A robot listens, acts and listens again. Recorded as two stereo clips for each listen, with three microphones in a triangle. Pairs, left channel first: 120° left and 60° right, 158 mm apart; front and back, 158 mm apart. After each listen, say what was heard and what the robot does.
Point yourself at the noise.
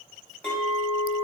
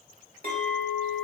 The clink: 160° right. Turn 160° right.
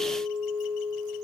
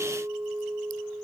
The clink is now 40° right. Turn 40° right.
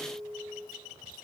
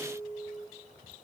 The clink is now 15° right. Turn 15° right.
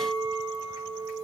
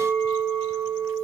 Found it: a clink, straight ahead.